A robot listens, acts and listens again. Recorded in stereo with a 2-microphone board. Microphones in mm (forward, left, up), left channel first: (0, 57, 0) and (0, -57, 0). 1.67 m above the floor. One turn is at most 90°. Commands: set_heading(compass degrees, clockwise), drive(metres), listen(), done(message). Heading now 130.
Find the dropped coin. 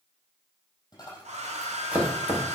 set_heading(95)
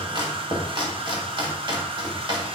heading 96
listen()
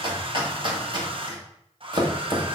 done("I heard a dropped coin, but can't make it out now. It was about straight ahead or 115° left.")